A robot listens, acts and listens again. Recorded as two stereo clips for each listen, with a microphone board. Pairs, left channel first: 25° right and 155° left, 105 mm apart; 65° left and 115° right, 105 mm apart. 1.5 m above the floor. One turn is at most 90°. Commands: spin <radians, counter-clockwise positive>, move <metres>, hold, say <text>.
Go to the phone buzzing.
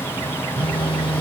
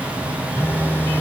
move 1.0
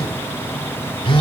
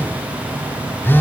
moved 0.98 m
move 1.0
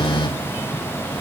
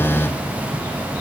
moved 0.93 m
move 1.0
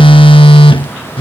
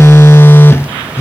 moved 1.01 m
move 1.0
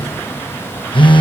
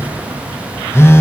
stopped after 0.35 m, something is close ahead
say I am next to the phone buzzing.